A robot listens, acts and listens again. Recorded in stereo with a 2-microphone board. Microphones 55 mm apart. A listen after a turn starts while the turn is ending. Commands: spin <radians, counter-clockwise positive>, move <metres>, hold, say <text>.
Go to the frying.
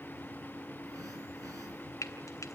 spin 1.22
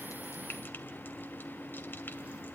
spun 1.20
hold
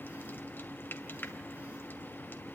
spin 0.70
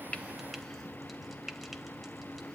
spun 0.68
move 1.0
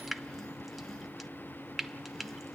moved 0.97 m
move 1.0
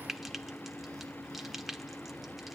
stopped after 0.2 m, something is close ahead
say I am next to the frying.